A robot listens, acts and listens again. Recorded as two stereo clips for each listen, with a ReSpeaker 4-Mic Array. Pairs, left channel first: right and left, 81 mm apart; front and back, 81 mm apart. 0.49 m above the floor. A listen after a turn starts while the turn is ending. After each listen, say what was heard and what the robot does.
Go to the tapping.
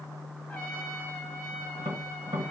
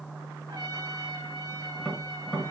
The tapping: 85° left. Turn 85° left.
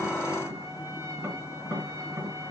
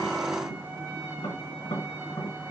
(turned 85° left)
The tapping is now 20° left. Turn 20° left.
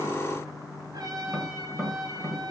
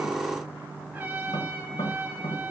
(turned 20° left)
Drive 1.0 m forward.
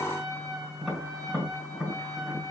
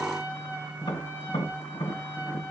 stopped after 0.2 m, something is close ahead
Blocked. The tapping is further on, straight ahead.